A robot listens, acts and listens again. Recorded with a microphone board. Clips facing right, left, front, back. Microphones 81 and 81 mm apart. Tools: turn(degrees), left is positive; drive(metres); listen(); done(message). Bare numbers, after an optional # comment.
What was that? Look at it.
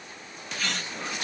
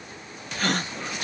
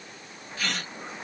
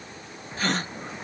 # The gasp: 130° left.
turn(130)
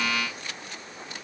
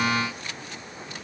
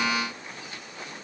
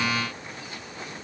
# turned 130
done("Facing where the gasp came from. I can't hear it now.")